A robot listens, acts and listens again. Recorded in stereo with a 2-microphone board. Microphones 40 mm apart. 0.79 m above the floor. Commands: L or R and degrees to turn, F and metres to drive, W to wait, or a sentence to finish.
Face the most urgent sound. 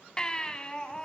L20
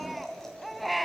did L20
Facing the baby crying, 2 to 4 m away.